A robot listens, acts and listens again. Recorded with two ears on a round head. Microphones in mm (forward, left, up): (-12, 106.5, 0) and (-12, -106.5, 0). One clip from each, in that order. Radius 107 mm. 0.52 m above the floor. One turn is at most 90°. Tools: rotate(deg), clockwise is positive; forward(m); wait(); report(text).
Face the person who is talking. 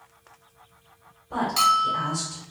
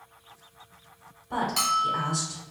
rotate(40)
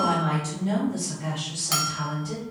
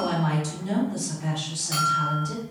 rotate(10)
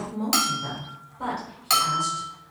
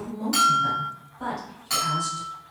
report("Found it: a woman speaking, straight ahead, 1 to 2 m away.")